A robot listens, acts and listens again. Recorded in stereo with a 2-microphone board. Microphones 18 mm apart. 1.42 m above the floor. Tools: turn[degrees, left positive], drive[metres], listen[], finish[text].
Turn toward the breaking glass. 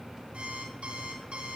Action: listen[]
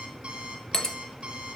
Thought: The breaking glass: about 25° left or 155° left.
Action: turn[25]
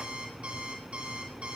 Action: listen[]
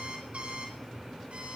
Action: finish[I heard breaking glass, but can't make it out now. It was about straight ahead or 130° left.]